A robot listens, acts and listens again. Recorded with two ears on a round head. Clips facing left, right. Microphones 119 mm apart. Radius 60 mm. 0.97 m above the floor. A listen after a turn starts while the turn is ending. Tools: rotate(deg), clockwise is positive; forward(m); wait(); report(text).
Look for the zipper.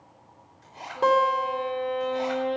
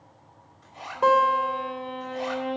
rotate(-45)
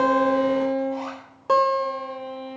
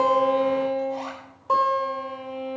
wait()
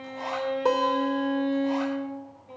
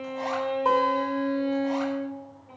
wait()
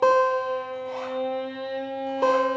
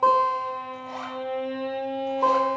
report("I heard a zipper, but can't make it out now. It was about straight ahead or 90° left.")